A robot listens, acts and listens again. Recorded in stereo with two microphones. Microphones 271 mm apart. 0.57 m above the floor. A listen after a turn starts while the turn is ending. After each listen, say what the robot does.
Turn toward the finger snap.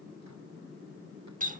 Keep listening.
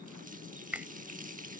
Turn 30° right.
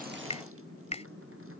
Turn 25° left.
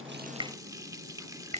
Turn 25° right.
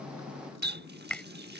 Facing the finger snap.